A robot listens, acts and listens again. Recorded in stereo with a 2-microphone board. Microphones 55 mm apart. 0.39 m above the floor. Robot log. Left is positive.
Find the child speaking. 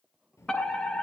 note: The child speaking: about 55° left or 125° left.
cmd yaw +55
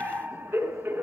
cmd idle
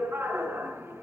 cmd idle
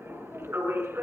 note: So it is at 50° left.
cmd yaw +50
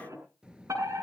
note: The child speaking is now 15° right.
cmd yaw -15
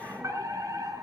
cmd idle
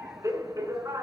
cmd idle
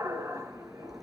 end: Facing the child speaking, over 4 m away.